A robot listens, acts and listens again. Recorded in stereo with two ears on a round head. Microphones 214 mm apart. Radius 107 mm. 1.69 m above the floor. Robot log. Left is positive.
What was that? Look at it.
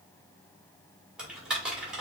cmd yaw -30
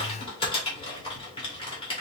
note: So it is at 25° left.
cmd yaw +25
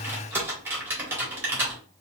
note: The typing on a keyboard is now 10° right.
cmd yaw -10
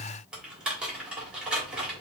end: Found it: typing on a keyboard, straight ahead.